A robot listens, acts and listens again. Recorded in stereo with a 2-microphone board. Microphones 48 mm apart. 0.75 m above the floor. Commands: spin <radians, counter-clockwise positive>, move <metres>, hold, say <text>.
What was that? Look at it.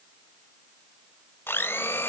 spin 0.96
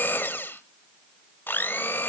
spin 0.96
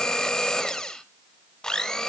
spin 0.26
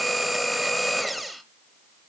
say Found it: a blender, straight ahead, under 1 m away.